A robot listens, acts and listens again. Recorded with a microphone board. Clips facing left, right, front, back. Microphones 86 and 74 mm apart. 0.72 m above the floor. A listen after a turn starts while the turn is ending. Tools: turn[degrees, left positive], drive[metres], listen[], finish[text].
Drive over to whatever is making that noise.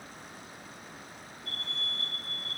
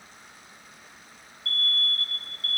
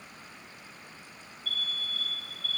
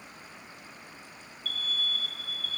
Thought: The alarm: 170° left.
Action: turn[170]
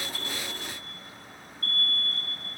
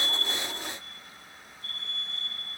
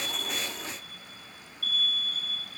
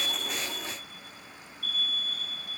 Thought: The alarm is now 10° right.
Action: turn[-10]
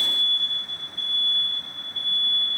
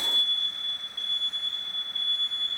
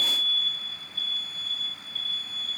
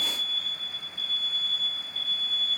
Action: drive[1.0]
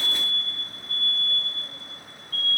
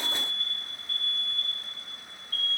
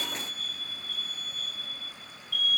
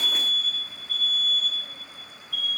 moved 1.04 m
Action: drive[1.0]
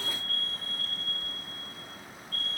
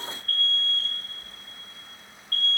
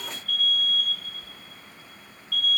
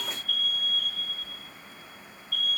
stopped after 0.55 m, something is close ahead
Thought: The alarm is now 10° left.
Action: turn[10]
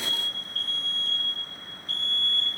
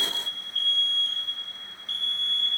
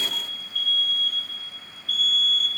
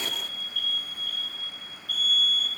Action: finish[Arrived at the alarm, straight ahead.]